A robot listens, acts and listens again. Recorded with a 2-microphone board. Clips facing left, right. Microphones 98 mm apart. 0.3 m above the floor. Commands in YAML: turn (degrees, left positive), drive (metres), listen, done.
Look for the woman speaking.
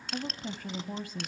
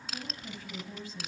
turn: 55
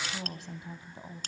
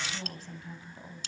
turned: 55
turn: 25
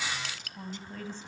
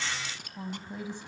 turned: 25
turn: -20
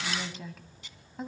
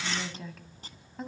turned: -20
done: "Found it: a woman speaking, straight ahead, 1 to 2 m away."